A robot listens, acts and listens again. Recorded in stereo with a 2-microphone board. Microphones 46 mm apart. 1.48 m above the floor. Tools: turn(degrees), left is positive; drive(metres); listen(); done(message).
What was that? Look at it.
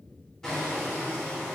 turn(degrees=30)
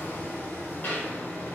turn(degrees=140)
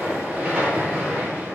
turn(degrees=-30)
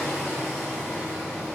done("Found it: hammering, straight ahead, 2 to 4 m away.")